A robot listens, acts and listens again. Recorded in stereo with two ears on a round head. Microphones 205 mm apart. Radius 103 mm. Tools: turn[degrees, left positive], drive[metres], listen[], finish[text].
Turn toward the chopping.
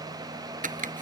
Thought: The chopping: about 35° right or 145° right.
Action: turn[-35]
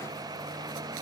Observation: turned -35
Action: listen[]
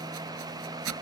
Thought: So it is at 110° right.
Action: turn[-110]
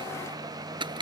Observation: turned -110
Thought: The chopping is now 20° right.
Action: turn[-20]
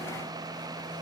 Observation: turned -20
Action: listen[]
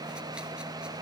Action: listen[]
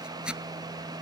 Action: finish[Found it: chopping, straight ahead.]